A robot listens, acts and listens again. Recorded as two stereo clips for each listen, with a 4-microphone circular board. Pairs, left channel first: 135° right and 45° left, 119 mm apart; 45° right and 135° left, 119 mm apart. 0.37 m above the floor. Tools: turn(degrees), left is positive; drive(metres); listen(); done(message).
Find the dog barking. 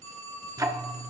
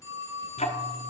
listen()
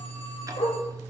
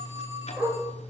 turn(degrees=-155)
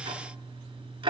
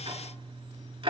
listen()
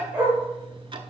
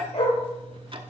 turn(degrees=-30)
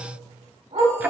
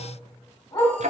done("Facing the dog barking.")